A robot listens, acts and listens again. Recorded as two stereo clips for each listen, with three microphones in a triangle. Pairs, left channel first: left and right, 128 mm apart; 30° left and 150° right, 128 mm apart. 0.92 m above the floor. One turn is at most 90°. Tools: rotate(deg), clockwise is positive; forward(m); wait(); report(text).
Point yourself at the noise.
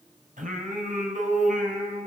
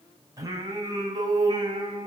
rotate(90)
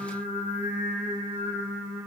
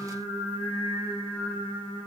rotate(20)
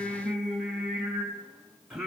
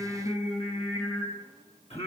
report("Found it: singing, straight ahead.")